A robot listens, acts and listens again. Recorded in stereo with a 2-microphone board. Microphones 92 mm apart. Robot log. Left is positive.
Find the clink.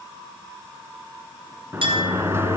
note: The clink: about 70° right or 110° right.
cmd yaw -70
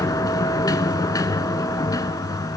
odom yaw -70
cmd idle
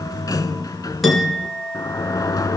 end: Found it: a clink, straight ahead, 2 to 4 m away.